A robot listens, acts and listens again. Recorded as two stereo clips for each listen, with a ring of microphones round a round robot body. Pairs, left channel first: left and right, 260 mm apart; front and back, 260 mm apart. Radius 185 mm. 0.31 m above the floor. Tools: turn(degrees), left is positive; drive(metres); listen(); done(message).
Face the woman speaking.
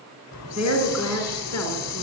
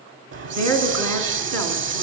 turn(degrees=180)
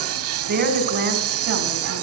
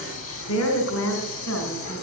turn(degrees=-45)
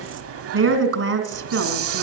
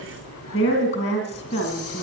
turn(degrees=-55)
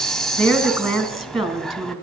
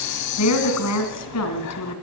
done("Found it: a woman speaking, straight ahead.")